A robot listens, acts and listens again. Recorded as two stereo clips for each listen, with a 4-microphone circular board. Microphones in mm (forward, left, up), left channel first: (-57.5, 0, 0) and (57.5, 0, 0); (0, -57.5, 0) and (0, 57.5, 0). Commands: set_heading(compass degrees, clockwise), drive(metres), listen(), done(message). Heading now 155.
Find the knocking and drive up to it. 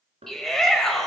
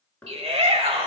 set_heading(165)
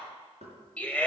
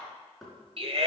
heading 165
drive(1.0)
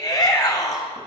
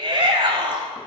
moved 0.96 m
listen()
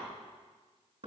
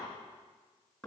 drive(1.0)
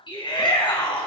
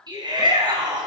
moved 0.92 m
listen()
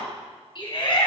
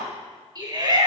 listen()
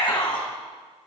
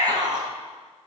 done("Facing where the knocking came from. I can't hear it now. I did not reach it.")